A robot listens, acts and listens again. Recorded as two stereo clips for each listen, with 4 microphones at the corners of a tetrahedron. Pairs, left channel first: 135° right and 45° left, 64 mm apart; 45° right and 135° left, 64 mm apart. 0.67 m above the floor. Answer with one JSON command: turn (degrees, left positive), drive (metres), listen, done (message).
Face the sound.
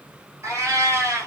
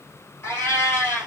{"done": "Facing the cat meowing, 2 to 4 m away."}